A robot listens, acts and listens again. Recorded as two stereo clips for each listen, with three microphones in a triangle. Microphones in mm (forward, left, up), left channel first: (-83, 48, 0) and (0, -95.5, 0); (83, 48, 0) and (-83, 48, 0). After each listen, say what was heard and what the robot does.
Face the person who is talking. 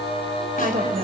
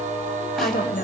The woman speaking: 25° right. Turn 25° right.
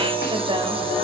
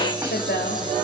Keep listening.
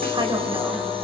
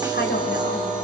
Found it: a woman speaking, straight ahead, 2 to 4 m away.